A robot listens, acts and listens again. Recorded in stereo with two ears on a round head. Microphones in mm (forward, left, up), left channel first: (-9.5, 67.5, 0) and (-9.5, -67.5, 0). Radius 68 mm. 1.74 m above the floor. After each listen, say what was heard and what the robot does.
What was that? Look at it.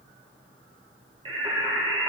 The singing: about 30° right or 150° right. Turn 30° right.
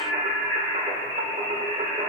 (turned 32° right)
The singing: about 40° right or 140° right. Turn 40° right.
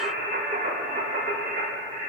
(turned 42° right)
So it is at 125° right. Turn 125° right.
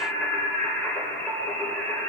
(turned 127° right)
The singing is now 10° left. Turn 10° left.
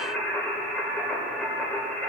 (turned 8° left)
Found it: singing, straight ahead, 2 to 4 m away.